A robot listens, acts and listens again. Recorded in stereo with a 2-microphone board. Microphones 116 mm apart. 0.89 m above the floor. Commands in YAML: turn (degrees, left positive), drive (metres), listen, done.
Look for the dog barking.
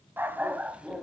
turn: -30
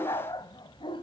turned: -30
turn: 45
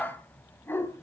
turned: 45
turn: 20
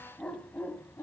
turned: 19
turn: 20
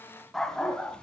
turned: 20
turn: 10
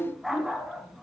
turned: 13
done: "Facing the dog barking, 2 to 4 m away."